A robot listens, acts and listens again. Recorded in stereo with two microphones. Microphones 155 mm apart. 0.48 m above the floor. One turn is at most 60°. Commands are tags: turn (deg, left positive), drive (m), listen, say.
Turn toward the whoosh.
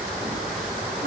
<listen/>
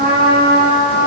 <listen/>
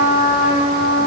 <say>I can't make out a whoosh to turn to.</say>